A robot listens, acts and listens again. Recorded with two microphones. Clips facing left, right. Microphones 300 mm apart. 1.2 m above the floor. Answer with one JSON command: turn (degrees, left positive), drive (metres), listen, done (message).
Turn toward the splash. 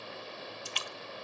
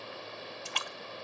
{"turn": -65}
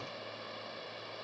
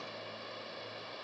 {"listen": true}
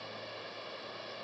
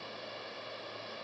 {"done": "I heard a splash, but can't make it out now. It was about straight ahead or 50° right."}